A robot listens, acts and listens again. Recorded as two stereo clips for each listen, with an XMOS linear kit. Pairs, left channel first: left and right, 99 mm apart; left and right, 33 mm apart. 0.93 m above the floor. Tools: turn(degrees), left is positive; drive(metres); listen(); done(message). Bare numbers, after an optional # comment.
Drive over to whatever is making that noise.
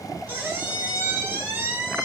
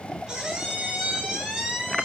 # The squeak: about 25° right or 155° right.
turn(-25)
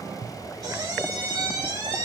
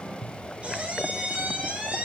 # So it is at 130° right.
turn(-130)
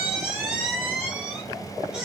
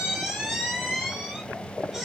drive(1.0)
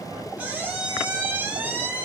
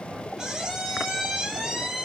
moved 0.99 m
# The squeak is now 15° right.
turn(-15)
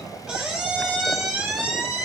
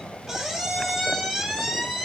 drive(1.0)
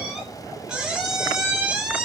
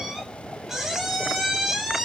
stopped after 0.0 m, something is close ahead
# The squeak is now 10° right.
turn(-10)
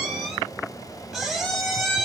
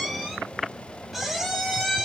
done("I am next to the squeak.")